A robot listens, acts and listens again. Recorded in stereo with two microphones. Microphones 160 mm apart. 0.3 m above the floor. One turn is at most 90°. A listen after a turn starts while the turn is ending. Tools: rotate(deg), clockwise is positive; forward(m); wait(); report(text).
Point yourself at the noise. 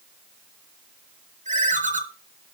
rotate(50)
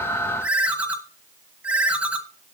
rotate(10)
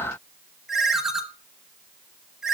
report("Found it: a ringtone, straight ahead.")